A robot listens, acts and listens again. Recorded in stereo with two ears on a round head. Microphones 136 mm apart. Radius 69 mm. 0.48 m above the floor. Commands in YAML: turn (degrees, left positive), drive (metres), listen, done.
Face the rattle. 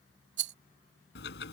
turn: -90
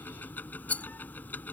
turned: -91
turn: 10
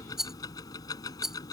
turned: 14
done: "Found it: a rattle, straight ahead."